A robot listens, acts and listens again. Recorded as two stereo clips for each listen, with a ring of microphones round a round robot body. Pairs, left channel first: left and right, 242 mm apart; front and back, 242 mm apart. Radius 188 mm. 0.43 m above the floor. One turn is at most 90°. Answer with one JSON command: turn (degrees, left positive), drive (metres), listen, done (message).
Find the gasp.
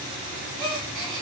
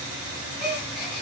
{"turn": -90}
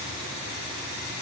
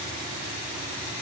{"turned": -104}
{"turn": -15}
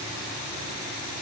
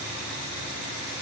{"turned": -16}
{"done": "I heard a gasp from this way, but can't make it out now."}